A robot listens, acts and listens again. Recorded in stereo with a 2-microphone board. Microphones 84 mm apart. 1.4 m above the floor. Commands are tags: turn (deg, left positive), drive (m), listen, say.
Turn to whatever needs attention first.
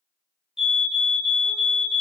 <turn deg="-30"/>
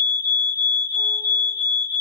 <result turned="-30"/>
<turn deg="20"/>
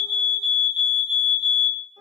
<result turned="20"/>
<say>Found it: a fire alarm, straight ahead.</say>